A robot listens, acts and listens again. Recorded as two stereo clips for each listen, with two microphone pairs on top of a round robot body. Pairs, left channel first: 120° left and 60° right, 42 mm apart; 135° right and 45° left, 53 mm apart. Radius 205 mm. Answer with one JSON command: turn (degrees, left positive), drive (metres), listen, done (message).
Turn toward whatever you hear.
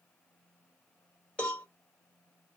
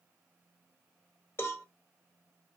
{"turn": -170}
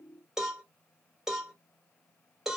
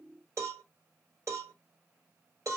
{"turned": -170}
{"turn": 20}
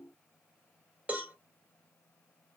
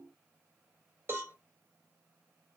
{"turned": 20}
{"done": "Found it: a cowbell, straight ahead."}